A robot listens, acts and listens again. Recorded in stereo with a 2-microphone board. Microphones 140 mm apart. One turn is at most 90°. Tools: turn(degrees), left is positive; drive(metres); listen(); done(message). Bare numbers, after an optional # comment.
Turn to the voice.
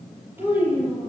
# The child speaking: about 15° right or 165° right.
turn(-15)
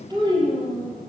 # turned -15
# The child speaking: about 35° right or 145° right.
turn(-35)
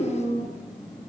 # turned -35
# So it is at 110° right.
turn(-90)
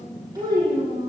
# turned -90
# The child speaking is now 25° right.
turn(-25)
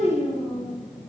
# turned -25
done("Found it: a child speaking, straight ahead.")